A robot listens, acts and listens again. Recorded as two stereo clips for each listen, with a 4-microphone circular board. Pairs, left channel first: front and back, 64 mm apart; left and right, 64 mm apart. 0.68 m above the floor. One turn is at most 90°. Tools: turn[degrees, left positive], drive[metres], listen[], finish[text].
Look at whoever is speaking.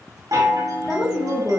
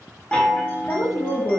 Thought: The woman speaking: 100° left.
Action: turn[90]
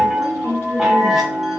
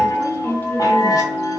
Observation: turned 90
Thought: The woman speaking is now 30° left.
Action: turn[30]
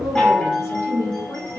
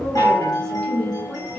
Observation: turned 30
Thought: The woman speaking is now 15° left.
Action: turn[15]
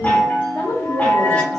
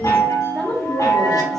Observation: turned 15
Action: finish[Found it: a woman speaking, straight ahead, 1 to 2 m away.]